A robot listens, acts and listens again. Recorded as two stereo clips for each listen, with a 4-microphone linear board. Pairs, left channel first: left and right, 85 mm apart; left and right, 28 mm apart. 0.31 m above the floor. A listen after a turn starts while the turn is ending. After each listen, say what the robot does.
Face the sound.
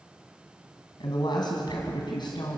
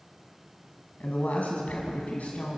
Turn 60° left.
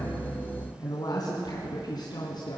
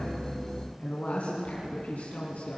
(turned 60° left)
Turn 60° left.
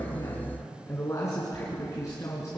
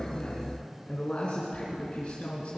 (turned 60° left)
Turn 40° left.
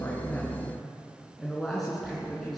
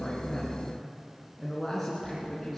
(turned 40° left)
Facing the woman speaking.